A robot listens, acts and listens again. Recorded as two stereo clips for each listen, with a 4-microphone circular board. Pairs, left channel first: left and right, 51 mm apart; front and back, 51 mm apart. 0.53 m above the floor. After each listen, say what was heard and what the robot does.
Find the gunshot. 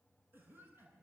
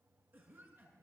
Keep listening.
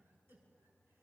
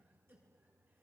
Keep listening.
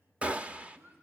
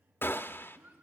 The gunshot: 30° right. Turn 30° right.
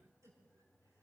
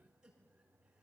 I heard a gunshot from this way, but can't make it out now.